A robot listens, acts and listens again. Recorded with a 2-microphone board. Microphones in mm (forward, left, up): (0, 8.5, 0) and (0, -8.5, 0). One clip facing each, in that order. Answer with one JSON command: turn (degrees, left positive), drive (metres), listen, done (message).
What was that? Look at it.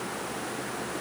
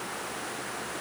{"listen": true}
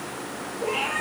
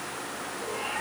{"turn": 75}
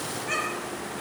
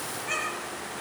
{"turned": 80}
{"turn": -10}
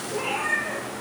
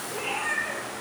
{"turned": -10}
{"done": "Found it: a cat meowing, straight ahead."}